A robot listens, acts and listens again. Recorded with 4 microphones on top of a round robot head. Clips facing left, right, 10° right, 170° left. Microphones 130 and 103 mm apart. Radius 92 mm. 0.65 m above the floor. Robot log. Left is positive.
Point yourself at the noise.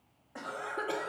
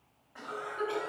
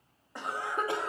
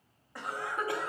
note: The cough: 55° left.
cmd yaw +55
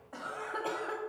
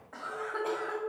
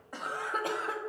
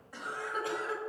note: The cough is now 15° left.
cmd yaw +15
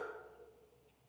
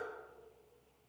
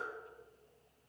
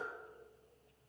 cmd idle
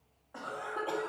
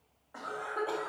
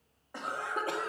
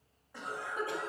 note: The cough is now 10° left.
cmd yaw +10
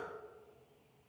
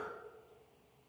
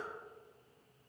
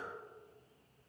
cmd idle
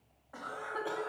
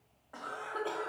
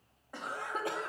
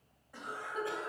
end: Facing the cough.